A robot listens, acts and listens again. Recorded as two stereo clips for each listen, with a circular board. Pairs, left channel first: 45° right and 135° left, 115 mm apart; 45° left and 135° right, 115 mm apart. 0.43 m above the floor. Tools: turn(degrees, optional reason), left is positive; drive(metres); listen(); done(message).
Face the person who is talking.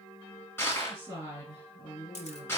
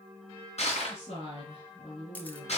turn(degrees=65, reason="The woman speaking: 65° left.")
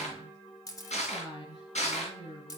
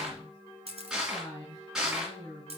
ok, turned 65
turn(degrees=-10, reason="The woman speaking is now 10° right.")
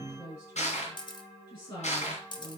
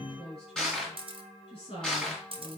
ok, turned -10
done("Facing the woman speaking.")